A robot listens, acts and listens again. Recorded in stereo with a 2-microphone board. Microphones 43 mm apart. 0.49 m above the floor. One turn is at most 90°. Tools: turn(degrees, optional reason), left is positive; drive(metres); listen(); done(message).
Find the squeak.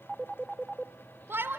listen()
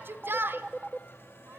listen()
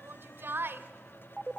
done("I can't make out a squeak to turn to.")